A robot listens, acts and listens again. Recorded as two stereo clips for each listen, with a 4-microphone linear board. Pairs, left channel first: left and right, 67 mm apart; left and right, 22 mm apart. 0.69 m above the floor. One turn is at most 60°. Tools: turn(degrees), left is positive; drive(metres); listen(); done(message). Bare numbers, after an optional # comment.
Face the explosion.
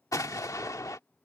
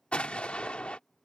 # The explosion: about 60° left or 120° left.
turn(60)
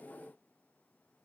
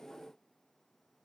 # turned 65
listen()
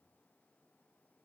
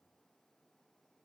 done("I heard an explosion, but can't make it out now. It was about 5° right or 55° left.")